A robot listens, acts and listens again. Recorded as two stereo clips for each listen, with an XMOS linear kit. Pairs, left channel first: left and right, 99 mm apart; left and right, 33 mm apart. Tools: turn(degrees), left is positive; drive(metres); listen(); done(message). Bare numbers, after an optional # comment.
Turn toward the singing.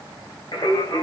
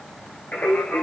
# The singing: about 70° left or 110° left.
turn(70)
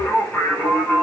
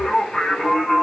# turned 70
# So it is at 15° left.
turn(15)
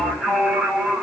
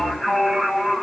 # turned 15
# The singing is now 10° right.
turn(-10)
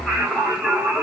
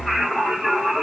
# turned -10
# The singing is now 10° right.
turn(-10)
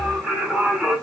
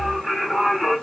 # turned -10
# The singing is now 15° right.
turn(-15)
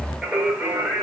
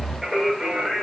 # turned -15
# The singing is now 15° right.
turn(-15)
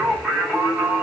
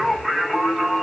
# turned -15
done("Facing the singing, 1 to 2 m away.")